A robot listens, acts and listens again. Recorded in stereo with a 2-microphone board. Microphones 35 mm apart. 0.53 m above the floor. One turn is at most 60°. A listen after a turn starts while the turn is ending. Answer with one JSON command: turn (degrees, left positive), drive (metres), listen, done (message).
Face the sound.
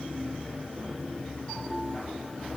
{"listen": true}
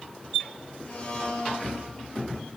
{"turn": 40}
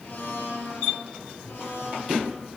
{"turn": 60}
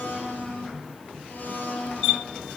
{"turn": 50}
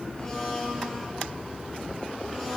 {"done": "Facing the blender, 2 to 4 m away."}